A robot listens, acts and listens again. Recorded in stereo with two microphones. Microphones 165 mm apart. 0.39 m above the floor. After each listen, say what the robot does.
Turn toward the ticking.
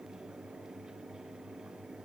Keep listening.
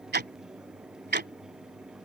Turn 70° right.
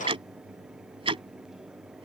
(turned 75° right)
Turn 35° right.
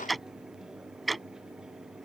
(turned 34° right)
Found it: ticking, straight ahead.